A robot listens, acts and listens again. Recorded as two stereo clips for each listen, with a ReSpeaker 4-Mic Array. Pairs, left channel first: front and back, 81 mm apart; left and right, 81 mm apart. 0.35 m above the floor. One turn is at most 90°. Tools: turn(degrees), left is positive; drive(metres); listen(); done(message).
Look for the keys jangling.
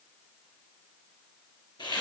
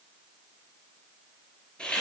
listen()
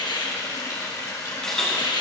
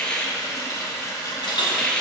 turn(degrees=80)
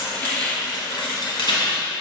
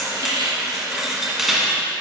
done("Facing the keys jangling.")